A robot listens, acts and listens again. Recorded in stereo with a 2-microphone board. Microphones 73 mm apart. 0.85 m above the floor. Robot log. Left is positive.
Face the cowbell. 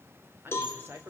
note: The cowbell: about 30° left or 150° left.
cmd yaw +30
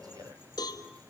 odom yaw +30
note: So it is at 115° left.
cmd yaw +115
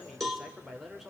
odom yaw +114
end: Facing the cowbell, 2 to 4 m away.